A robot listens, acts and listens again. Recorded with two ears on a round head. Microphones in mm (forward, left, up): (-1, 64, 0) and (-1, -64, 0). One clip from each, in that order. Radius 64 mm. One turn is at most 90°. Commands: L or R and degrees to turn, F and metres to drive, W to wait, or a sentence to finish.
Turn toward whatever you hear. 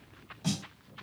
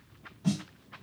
L55
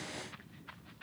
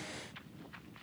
W
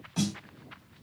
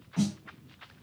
L70
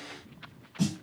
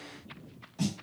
Facing the snare drum.